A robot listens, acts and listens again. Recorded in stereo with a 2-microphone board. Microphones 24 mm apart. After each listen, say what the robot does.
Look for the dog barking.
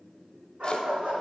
Turn 60° right.
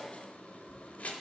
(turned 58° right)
Keep listening.
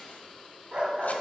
Turn 35° right.
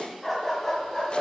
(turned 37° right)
Turn 25° left.
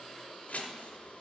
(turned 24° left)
Keep listening.
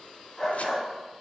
Turn 15° left.
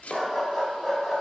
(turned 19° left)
Found it: a dog barking, straight ahead.